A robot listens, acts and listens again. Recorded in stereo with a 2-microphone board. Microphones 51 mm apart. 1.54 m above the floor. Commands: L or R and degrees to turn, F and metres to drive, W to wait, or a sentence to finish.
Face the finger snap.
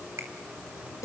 R65
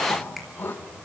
W
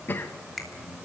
Facing the finger snap.